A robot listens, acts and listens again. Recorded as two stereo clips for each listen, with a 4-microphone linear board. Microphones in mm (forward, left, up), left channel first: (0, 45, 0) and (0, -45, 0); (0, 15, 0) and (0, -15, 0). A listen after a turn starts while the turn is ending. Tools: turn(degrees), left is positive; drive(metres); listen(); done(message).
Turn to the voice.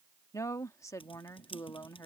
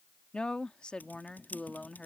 turn(degrees=35)
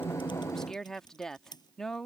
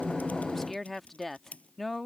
done("Found it: a woman speaking, straight ahead.")